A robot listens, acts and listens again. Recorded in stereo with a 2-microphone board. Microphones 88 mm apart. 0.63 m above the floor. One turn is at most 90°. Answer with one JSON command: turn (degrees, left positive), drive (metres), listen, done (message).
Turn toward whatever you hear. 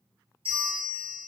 {"turn": -90}
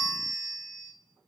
{"done": "Facing the bell."}